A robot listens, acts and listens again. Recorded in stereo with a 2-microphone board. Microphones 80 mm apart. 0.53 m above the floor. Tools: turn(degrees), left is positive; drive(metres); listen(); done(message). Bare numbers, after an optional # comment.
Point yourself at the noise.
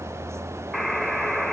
turn(30)
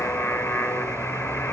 # So it is at 150° left.
turn(150)
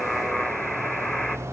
done("Found it: a buzzer, straight ahead.")